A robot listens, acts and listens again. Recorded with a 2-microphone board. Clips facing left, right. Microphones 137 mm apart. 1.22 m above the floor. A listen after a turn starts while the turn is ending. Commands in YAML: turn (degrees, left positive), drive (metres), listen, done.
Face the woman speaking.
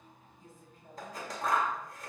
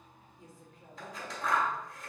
turn: -90
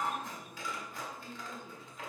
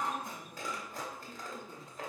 turn: 15
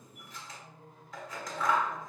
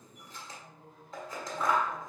turn: 10
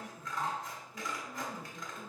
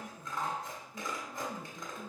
turn: 10
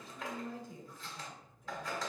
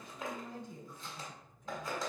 done: "Facing the woman speaking."